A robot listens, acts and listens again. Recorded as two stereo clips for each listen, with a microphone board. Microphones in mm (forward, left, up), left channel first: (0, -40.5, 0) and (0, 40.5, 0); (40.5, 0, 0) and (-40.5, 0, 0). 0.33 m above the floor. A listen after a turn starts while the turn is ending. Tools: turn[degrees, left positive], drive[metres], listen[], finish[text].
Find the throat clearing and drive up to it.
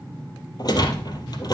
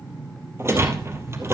Action: listen[]
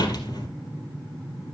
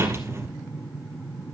Action: listen[]
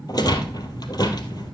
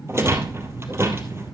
Action: finish[I can't make out throat clearing, only a rattle.]